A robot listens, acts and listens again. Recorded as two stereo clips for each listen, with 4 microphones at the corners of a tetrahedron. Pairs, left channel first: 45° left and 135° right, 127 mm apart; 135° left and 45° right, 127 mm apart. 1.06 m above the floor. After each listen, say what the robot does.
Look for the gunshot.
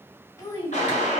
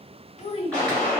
Turn 55° left.
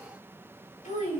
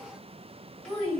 Facing where the gunshot came from. I can't hear it now.